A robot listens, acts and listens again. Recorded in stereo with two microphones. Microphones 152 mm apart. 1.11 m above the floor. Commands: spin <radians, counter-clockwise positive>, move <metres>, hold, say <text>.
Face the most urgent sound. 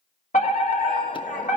spin 0.96
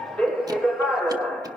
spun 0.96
spin 0.17
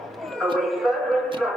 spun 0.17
say Facing the fire alarm.